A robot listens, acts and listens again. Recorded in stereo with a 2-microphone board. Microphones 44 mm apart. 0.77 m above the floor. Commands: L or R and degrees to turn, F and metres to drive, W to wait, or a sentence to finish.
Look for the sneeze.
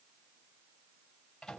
W
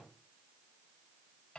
W
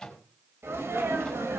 R90
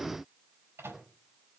Facing where the sneeze came from. I can't hear it now.